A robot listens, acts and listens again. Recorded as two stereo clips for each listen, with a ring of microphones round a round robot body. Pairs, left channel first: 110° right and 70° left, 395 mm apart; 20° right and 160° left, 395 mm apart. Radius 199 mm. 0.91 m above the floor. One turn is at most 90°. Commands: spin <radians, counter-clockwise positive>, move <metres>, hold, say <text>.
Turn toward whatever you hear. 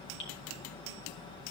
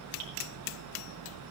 spin -1.57
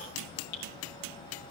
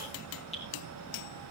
spin -1.57
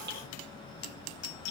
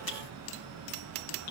spin -0.17
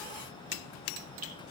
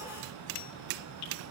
hold
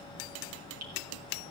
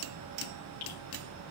spin 0.26
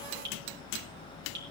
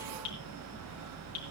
say Found it: dripping, straight ahead.